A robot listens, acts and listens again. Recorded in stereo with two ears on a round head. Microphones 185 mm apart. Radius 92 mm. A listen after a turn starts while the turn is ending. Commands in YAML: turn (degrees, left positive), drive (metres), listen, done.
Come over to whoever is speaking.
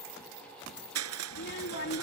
turn: 55
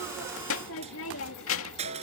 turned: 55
turn: 75
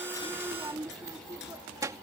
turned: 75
turn: -15
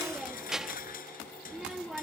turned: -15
drive: 1.0
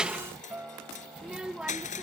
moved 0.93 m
drive: 1.0
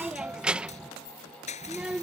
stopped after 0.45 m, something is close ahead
done: "Arrived at the child speaking, straight ahead."